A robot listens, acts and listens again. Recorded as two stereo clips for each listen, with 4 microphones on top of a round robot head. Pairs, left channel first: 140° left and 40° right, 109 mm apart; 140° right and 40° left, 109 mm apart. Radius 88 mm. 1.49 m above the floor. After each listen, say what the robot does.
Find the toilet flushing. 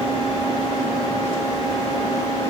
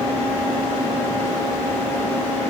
Keep listening.
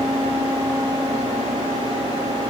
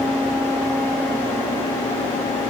Keep listening.
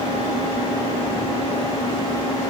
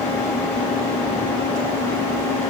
I can't make out a toilet flushing to turn to.